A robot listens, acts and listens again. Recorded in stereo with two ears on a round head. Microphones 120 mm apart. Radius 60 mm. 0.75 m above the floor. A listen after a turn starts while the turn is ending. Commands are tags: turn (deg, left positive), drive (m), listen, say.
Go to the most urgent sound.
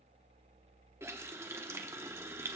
<listen/>
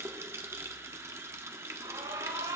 <turn deg="-30"/>
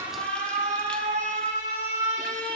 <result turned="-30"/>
<turn deg="-120"/>
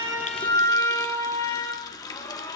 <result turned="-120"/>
<turn deg="20"/>
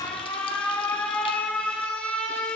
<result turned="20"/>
<turn deg="10"/>
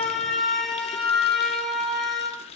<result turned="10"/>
<drive m="1.0"/>
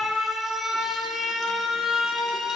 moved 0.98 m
<drive m="1.0"/>
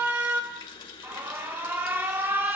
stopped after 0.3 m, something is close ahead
<turn deg="-15"/>
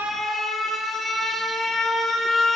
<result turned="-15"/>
<say>I am next to the alarm.</say>